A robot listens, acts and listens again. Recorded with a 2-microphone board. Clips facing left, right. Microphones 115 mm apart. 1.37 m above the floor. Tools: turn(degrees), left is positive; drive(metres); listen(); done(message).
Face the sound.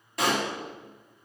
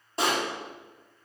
turn(degrees=-30)
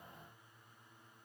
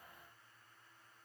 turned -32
listen()
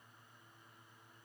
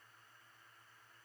done("I heard a pop, but can't make it out now. It was about straight ahead or 115° right.")